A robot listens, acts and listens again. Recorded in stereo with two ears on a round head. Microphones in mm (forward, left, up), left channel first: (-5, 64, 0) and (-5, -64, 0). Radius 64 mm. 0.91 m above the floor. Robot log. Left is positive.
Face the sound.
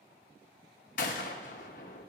note: The gunshot: about 60° left or 120° left.
cmd yaw +60
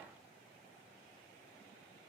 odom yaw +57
cmd idle
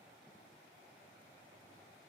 end: I heard a gunshot, but can't make it out now. It was about straight ahead or 65° left.